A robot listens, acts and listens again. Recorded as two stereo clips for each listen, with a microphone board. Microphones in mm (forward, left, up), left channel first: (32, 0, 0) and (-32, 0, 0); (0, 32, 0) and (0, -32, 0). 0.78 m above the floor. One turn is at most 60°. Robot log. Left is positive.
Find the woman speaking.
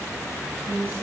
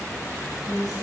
note: The woman speaking: 65° left.
cmd yaw +60
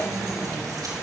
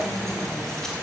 cmd idle
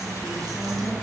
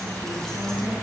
note: The woman speaking is now 15° left.
cmd yaw +15
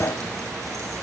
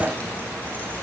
cmd idle
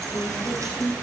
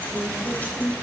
end: Found it: a woman speaking, straight ahead, over 4 m away.